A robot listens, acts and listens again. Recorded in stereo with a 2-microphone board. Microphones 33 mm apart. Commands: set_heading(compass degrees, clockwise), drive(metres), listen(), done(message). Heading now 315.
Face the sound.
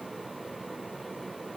listen()
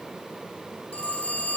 set_heading(275)
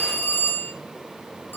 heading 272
set_heading(177)
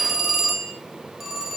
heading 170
done("Found it: a phone ringing, straight ahead, 2 to 4 m away.")